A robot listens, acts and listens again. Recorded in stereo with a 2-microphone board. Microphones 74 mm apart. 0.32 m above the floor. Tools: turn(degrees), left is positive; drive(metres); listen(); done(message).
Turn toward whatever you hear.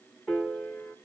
turn(degrees=30)
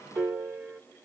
turn(degrees=-20)
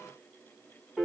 done("Facing the piano.")